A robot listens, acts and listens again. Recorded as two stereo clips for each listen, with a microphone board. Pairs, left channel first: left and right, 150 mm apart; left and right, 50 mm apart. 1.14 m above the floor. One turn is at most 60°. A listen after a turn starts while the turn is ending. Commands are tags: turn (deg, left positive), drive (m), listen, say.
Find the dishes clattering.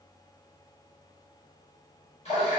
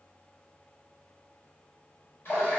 <listen/>
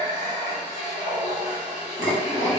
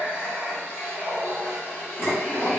<turn deg="60"/>
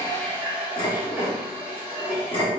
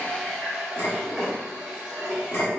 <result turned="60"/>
<turn deg="40"/>
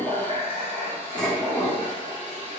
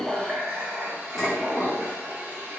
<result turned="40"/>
<say>Found it: dishes clattering, straight ahead, 1 to 2 m away.</say>